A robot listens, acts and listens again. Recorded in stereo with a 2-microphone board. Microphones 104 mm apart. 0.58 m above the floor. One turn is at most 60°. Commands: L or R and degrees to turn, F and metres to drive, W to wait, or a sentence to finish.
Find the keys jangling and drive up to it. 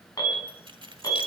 R50
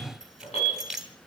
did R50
F1.0
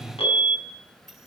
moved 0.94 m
F1.0
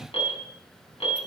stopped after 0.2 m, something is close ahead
W
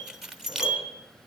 Arrived at the keys jangling, straight ahead.